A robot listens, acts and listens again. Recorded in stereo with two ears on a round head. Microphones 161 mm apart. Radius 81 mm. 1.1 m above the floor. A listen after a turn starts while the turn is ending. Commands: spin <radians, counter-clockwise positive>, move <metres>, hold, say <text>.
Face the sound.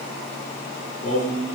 spin 0.70
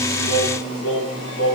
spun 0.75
spin 1.75
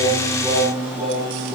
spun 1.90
say Found it: singing, straight ahead, over 4 m away.